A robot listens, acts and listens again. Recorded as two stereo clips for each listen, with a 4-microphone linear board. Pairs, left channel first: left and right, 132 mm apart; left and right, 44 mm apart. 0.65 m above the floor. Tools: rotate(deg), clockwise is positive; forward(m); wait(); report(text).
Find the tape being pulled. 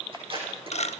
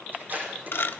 rotate(50)
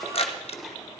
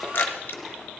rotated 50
wait()
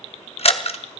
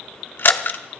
wait()
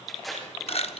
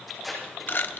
report("Facing the tape being pulled.")